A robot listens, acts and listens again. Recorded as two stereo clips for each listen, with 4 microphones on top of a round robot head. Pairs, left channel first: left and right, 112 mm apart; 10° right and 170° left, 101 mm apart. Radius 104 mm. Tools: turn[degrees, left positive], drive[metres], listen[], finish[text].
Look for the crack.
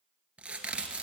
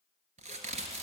Thought: The crack: 170° right.
Action: turn[-170]
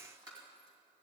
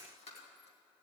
Action: finish[I heard a crack from this way, but can't make it out now.]